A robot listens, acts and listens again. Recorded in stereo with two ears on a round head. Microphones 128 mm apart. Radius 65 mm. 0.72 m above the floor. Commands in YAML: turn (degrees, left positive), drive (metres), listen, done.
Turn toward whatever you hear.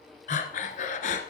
turn: 55
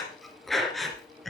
done: "Facing the breathing."